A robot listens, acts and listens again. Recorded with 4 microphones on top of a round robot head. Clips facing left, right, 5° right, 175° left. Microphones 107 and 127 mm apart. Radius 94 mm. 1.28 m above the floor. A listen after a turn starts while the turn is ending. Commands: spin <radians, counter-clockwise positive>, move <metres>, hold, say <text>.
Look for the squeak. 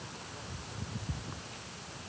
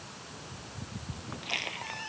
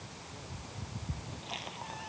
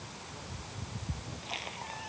spin -1.66
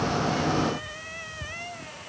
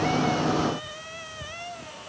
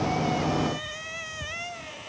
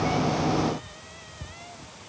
spin -0.17
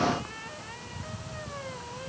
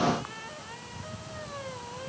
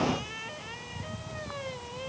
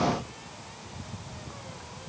say Found it: a squeak, straight ahead.